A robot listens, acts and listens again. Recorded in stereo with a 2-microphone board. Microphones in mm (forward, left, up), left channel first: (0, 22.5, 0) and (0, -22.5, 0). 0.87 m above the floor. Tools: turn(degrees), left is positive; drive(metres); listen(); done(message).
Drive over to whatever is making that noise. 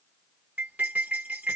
turn(degrees=-30)
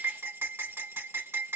turn(degrees=-115)
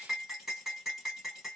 drive(metres=1.0)
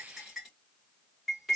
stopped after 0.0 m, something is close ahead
done("Something is in my way. I am facing the cutlery clinking but have not reached it.")